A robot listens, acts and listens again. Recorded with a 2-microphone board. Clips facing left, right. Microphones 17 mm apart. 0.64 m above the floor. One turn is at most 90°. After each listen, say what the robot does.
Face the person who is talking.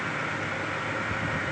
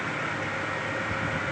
Keep listening.
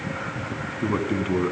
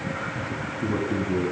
Turn 50° left.
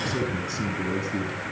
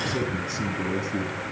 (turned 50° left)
Facing the man speaking, over 4 m away.